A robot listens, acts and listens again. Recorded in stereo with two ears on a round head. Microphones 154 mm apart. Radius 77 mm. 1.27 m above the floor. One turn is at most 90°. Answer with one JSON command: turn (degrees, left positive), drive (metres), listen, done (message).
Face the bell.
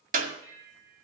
{"turn": -25}
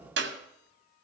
{"listen": true}
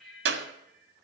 {"done": "Facing the bell."}